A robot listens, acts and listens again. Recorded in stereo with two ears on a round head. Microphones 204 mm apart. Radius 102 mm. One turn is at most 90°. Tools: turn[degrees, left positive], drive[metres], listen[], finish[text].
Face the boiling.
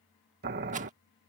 Thought: The boiling: about 45° right or 135° right.
Action: turn[-45]
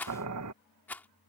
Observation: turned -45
Thought: So it is at 90° right.
Action: turn[-90]
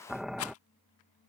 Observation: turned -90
Action: finish[Facing the boiling.]